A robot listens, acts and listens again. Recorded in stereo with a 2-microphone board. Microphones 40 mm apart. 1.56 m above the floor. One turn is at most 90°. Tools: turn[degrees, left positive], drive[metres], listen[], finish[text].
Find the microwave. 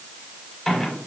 Action: turn[30]
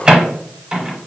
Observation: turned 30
Thought: So it is at 25° right.
Action: turn[-25]
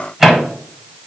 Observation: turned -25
Thought: The microwave is now 10° right.
Action: turn[-10]
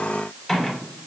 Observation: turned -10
Action: finish[Facing the microwave, under 1 m away.]